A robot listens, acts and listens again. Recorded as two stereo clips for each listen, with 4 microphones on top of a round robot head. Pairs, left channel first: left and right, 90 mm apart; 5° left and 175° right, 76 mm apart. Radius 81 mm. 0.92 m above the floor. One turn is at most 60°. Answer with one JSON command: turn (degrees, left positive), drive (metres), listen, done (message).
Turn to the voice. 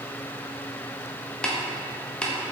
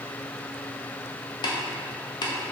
{"listen": true}
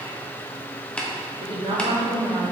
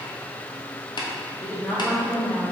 {"turn": -60}
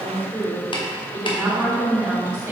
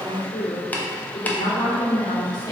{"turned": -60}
{"turn": -20}
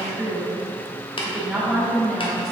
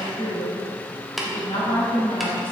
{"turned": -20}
{"done": "Facing the woman speaking, 2 to 4 m away."}